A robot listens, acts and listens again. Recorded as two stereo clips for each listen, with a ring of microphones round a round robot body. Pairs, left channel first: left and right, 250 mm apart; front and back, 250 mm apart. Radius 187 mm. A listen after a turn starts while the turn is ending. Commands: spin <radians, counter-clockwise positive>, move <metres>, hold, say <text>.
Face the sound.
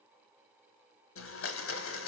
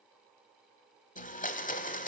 spin 1.05
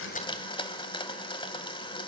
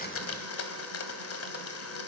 spin 0.35
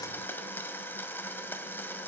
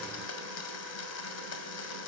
say Facing the blender.